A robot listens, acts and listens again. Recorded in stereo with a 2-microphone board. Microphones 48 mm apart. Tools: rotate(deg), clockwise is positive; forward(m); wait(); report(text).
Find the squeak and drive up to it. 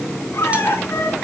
rotate(-75)
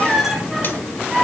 forward(1.0)
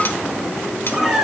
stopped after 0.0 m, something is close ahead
report("Blocked. The squeak is further on, straight ahead.")